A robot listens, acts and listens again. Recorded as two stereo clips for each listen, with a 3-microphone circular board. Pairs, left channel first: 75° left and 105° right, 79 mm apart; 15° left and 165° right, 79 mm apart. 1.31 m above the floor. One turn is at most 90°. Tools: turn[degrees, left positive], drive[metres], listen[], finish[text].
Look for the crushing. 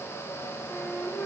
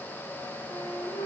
Action: listen[]
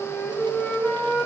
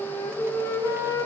Action: listen[]
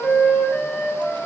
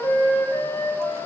Action: finish[I can't make out crushing to turn to.]